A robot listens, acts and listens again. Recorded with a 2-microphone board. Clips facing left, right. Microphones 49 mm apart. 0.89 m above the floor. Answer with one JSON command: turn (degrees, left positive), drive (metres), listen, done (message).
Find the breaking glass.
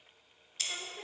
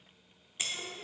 {"turn": -20}
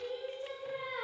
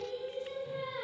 {"listen": true}
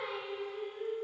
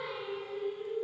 {"done": "I heard breaking glass, but can't make it out now. It was about straight ahead or 140° right."}